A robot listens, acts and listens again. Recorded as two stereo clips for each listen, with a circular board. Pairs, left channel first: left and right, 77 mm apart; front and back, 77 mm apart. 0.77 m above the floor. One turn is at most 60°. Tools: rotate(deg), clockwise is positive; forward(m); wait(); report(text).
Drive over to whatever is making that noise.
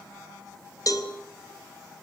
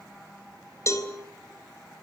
rotate(-50)
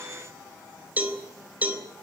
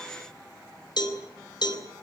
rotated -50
rotate(20)
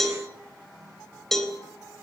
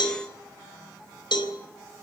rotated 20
forward(1.0)
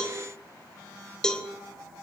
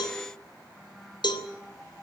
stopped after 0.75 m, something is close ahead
rotate(-10)
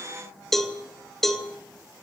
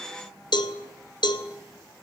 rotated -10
report("Something is in my way. I am facing the cowbell but have not reached it.")